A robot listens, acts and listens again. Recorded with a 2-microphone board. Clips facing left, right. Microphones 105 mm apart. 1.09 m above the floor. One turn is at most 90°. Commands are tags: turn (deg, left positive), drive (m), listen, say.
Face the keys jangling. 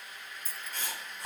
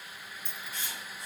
<turn deg="30"/>
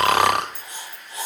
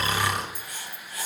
<turn deg="-45"/>
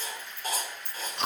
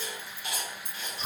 <turn deg="-45"/>
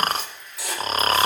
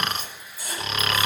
<listen/>
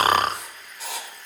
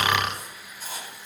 <listen/>
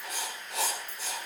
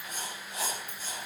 <turn deg="-15"/>
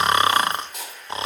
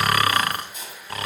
<listen/>
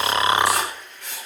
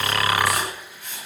<listen/>
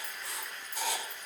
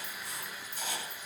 <say>I heard keys jangling from this way, but can't make it out now.</say>